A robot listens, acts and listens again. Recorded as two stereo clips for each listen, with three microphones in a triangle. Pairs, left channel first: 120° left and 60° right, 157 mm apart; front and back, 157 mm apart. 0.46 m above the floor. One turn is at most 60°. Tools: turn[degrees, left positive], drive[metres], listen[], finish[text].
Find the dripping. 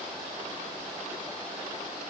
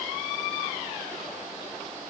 Action: listen[]
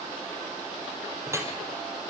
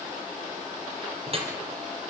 Thought: The dripping: 130° right.
Action: turn[-60]
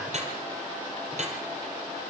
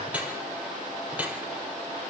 Thought: The dripping is now 100° right.
Action: turn[-60]
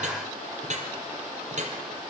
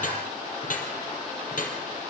Thought: The dripping is now 25° right.
Action: turn[-25]
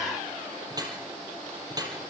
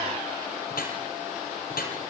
Action: finish[Found it: dripping, straight ahead.]